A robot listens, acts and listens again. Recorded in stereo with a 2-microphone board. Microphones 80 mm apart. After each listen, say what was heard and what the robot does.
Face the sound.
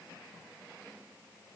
Keep listening.
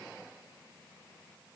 Keep listening.
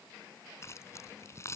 The keys jangling: about 35° left or 145° left. Turn 35° left.
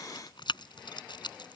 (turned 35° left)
So it is at 110° left. Turn 110° left.
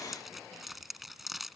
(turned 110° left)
Facing the keys jangling.